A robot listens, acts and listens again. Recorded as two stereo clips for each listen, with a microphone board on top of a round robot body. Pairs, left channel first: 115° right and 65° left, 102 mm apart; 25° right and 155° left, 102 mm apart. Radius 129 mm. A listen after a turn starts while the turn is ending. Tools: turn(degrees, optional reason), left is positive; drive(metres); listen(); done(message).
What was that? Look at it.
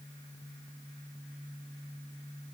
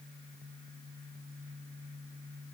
listen()
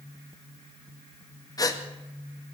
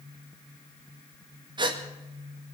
turn(degrees=-165, reason="The gasp: 165° right.")
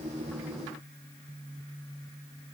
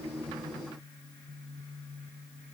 done("I heard a gasp from this way, but can't make it out now.")